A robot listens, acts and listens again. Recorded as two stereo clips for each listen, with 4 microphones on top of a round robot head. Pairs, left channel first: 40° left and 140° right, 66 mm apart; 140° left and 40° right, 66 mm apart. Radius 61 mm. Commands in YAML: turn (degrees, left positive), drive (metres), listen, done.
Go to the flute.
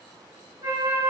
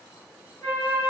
turn: -150
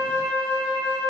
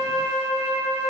turn: -70
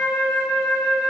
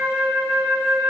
drive: 1.0
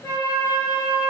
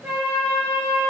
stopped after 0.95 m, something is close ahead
done: "Arrived at the flute, straight ahead."